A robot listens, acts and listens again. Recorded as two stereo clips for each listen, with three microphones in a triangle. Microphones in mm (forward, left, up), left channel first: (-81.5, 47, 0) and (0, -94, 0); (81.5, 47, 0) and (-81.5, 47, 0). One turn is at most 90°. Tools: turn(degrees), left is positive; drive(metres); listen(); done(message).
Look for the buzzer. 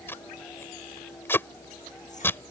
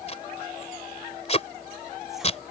listen()
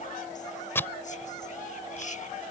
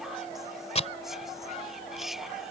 listen()
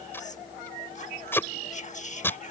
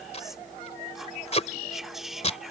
done("I can't make out a buzzer, only whispering and tape being pulled.")